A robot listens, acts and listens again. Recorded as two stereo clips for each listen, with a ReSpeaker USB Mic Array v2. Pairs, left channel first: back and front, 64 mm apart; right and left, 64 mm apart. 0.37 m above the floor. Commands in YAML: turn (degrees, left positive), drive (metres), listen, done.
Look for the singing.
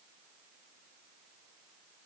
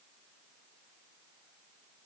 listen: true
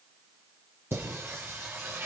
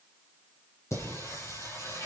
turn: -50
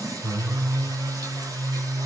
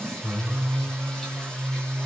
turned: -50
turn: -10
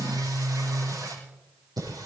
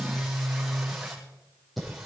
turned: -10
done: "Facing the singing."